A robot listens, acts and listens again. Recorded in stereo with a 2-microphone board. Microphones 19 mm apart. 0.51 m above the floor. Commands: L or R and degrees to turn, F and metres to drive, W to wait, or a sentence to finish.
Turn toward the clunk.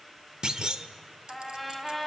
R40
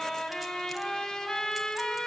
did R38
W
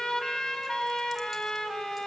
I heard a clunk, but can't make it out now. It was about 5° right or 100° right.